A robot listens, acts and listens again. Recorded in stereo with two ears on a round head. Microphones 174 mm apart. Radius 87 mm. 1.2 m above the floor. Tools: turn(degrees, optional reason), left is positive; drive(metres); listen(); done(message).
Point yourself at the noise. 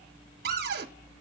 turn(degrees=-50, reason="The cupboard door: about 50° right or 130° right.")
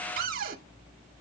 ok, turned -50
turn(degrees=-65, reason="So it is at 65° right.")
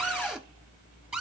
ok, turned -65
done("Found it: a cupboard door, straight ahead, under 1 m away.")